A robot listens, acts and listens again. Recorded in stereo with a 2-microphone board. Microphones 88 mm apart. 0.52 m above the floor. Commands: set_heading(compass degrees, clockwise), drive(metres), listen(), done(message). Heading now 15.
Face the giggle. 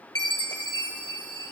listen()
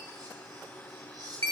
listen()
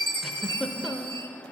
set_heading(45)
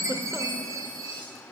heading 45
listen()
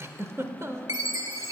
set_heading(190)
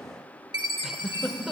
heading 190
done("Facing the giggle.")